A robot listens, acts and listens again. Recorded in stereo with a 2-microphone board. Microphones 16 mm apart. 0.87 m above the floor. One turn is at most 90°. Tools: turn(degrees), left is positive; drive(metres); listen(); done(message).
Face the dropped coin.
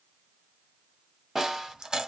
turn(degrees=-50)
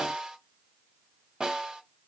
listen()
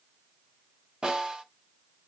done("I heard a dropped coin, but can't make it out now. It was about straight ahead or 80° right.")